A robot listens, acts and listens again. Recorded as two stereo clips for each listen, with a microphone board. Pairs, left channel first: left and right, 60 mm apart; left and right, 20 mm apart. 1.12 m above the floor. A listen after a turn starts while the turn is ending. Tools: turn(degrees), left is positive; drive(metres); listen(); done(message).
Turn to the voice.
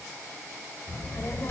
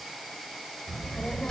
turn(degrees=45)
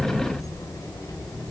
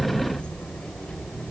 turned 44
turn(degrees=80)
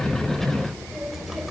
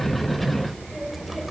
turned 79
done("Found it: a child speaking, straight ahead, over 4 m away.")